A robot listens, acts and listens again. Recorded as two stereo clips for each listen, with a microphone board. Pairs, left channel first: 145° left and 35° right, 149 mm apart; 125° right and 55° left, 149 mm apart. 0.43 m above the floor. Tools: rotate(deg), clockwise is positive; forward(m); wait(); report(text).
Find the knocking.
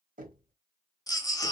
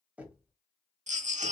rotate(25)
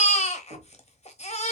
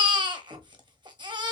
report("Facing the knocking, 1 to 2 m away.")